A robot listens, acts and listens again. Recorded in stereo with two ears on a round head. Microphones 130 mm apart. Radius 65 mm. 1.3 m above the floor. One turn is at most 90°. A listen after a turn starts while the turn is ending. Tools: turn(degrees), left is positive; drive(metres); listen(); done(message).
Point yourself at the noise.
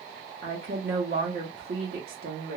turn(degrees=-70)
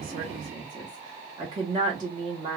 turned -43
turn(degrees=-30)
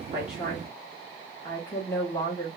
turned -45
turn(degrees=15)
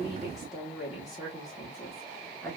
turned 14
done("Found it: a woman speaking, straight ahead, 1 to 2 m away.")